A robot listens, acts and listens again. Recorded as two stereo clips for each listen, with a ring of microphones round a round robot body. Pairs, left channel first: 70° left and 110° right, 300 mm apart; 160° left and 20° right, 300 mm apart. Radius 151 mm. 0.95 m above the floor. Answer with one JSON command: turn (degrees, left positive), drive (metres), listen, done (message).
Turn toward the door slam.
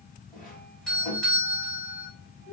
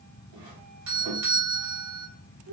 {"listen": true}
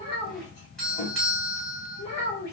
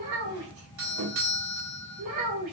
{"listen": true}
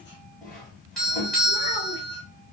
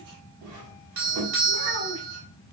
{"done": "I can't make out a door slam, only a doorbell and a child speaking."}